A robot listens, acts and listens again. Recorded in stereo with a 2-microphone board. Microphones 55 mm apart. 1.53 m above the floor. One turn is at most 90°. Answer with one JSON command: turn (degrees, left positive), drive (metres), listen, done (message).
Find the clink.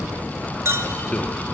{"turn": -50}
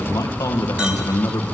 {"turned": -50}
{"listen": true}
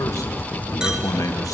{"listen": true}
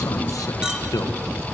{"turn": -15}
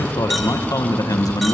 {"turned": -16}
{"listen": true}
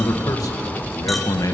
{"listen": true}
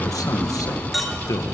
{"done": "Found it: a clink, straight ahead, 1 to 2 m away."}